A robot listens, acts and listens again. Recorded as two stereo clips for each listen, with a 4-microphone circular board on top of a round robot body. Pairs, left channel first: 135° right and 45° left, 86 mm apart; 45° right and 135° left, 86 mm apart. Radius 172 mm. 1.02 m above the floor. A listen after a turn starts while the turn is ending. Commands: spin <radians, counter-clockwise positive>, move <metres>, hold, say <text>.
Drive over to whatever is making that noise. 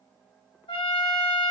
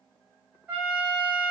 spin -2.62
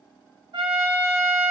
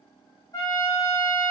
spin 0.17
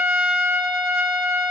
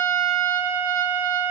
move 1.0
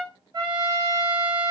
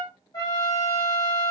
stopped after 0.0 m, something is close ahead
spin 0.17
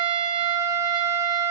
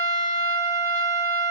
say Blocked. The trumpet is further on, straight ahead.